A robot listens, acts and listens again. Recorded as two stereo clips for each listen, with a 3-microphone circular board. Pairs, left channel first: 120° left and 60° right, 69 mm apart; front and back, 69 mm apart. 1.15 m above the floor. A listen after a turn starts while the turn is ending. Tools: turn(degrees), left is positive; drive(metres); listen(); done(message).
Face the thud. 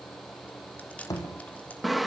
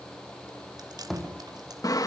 turn(degrees=85)
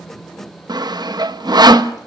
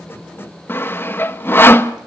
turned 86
done("Facing where the thud came from. I can't hear it now.")